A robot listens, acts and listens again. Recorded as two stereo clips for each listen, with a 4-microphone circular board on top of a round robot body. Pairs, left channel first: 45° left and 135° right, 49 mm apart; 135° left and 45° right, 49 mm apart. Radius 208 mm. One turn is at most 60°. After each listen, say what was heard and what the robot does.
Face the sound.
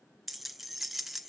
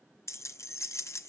The keys jangling: 140° left. Turn 60° left.
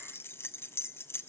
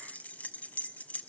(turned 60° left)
The keys jangling is now 80° left. Turn 60° left.
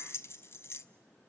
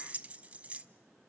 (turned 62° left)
The keys jangling is now 15° left. Turn 15° left.
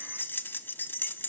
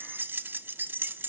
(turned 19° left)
Found it: keys jangling, straight ahead, under 1 m away.